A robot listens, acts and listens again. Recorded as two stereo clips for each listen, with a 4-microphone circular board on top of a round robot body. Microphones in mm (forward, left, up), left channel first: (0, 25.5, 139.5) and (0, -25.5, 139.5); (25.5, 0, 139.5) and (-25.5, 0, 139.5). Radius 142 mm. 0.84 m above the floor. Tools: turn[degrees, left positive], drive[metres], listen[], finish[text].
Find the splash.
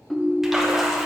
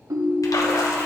Action: finish[Facing the splash, 1 to 2 m away.]